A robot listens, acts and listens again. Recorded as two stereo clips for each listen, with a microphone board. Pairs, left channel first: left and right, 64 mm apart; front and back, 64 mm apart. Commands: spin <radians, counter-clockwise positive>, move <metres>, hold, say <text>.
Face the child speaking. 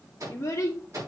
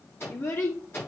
spin 0.79
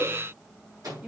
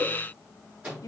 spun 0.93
spin -0.35
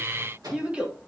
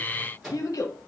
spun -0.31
spin -0.35
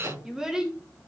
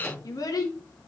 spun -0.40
spin -0.17
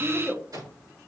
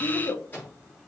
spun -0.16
spin -0.26
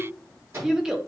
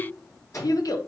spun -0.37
spin -0.17
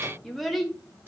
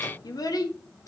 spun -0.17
say Found it: a child speaking, straight ahead.